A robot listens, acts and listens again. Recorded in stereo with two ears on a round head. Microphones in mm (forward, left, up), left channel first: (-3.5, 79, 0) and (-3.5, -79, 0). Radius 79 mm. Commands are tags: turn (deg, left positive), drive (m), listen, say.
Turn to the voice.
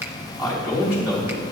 <turn deg="-30"/>
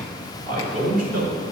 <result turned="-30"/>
<turn deg="-125"/>
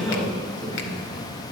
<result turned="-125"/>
<turn deg="-30"/>
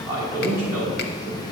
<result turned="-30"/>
<turn deg="-15"/>
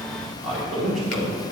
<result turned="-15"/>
<say>Found it: a man speaking, straight ahead, over 4 m away.</say>